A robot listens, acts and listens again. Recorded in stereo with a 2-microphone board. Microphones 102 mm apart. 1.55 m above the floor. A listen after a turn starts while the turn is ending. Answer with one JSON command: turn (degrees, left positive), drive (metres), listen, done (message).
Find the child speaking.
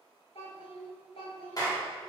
{"turn": 70}
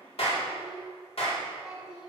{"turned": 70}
{"turn": -10}
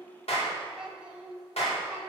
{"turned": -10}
{"turn": -15}
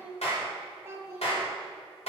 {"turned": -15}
{"turn": -30}
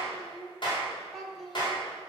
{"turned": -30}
{"done": "Facing the child speaking."}